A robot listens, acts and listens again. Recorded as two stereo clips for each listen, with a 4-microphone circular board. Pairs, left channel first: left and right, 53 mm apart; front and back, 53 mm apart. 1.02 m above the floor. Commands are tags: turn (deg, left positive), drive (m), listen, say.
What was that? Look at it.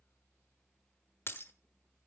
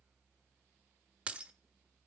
<turn deg="120"/>
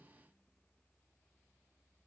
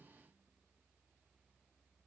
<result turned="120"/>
<say>I heard breaking glass from this way, but can't make it out now.</say>